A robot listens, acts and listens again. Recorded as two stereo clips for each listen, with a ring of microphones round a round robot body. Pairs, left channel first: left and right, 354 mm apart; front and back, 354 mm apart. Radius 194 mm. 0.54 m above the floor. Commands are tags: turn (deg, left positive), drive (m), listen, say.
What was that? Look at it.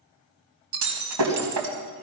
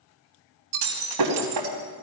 <turn deg="-135"/>
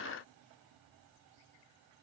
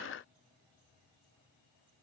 <say>I heard breaking glass from this way, but can't make it out now.</say>